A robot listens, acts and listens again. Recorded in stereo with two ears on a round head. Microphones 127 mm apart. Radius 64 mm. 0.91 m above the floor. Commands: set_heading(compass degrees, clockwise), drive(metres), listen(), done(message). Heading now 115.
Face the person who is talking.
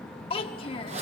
set_heading(75)
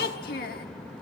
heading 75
set_heading(340)
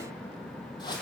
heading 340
listen()
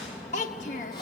set_heading(290)
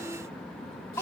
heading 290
set_heading(275)
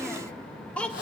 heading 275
set_heading(265)
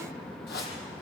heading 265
listen()
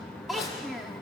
done("Found it: a child speaking, straight ahead, 1 to 2 m away.")